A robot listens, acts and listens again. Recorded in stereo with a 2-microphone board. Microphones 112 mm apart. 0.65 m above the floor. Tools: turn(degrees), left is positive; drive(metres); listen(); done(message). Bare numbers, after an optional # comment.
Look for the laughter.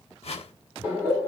# The laughter: about 15° right or 165° right.
turn(-15)
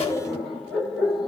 done("Found it: laughter, straight ahead, 2 to 4 m away.")